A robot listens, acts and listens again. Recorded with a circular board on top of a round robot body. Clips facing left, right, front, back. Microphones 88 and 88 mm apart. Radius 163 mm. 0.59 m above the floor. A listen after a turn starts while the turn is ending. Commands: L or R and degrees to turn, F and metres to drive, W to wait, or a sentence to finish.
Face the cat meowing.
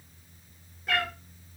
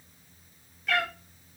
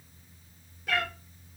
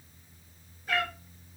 L30
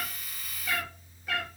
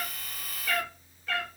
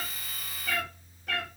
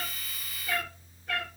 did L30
L15
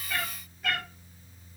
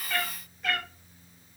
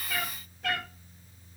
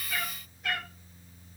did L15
Found it: a cat meowing, straight ahead.